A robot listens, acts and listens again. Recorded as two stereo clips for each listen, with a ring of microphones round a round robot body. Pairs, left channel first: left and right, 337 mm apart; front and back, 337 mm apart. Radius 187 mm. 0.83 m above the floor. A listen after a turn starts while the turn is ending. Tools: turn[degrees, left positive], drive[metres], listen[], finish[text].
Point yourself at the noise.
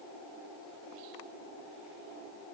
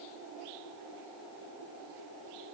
Action: listen[]
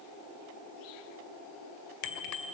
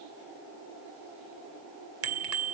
Thought: The bicycle bell: 130° left.
Action: turn[130]
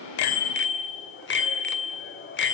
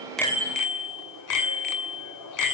Thought: The bicycle bell is now 35° left.
Action: turn[35]
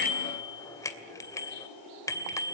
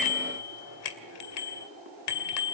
Thought: The bicycle bell is now 10° left.
Action: turn[10]
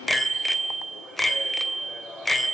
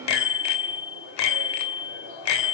Action: finish[Facing the bicycle bell.]